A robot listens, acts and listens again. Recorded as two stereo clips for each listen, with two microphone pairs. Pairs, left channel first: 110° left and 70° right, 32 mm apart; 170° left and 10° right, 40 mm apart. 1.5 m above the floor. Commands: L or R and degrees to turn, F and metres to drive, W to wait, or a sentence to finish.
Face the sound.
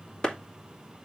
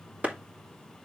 L45
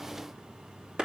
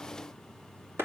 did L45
R10
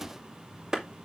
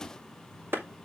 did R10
Facing the clap, 2 to 4 m away.